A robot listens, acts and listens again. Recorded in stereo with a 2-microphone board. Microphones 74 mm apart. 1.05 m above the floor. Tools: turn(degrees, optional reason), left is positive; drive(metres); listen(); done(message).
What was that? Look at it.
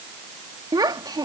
turn(degrees=-65, reason="The child speaking: about 65° right or 115° right.")
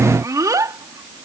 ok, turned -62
turn(degrees=-50, reason="So it is at 50° right.")
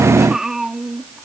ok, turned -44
done("Facing the child speaking.")